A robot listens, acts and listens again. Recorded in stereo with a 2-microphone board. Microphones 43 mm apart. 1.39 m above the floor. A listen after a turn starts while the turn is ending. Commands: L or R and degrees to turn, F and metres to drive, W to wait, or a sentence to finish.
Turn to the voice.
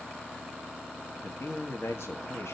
L90
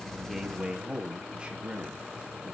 R30
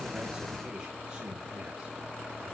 W
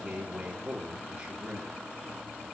R20
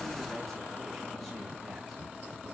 W
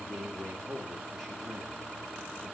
Facing the man speaking, 2 to 4 m away.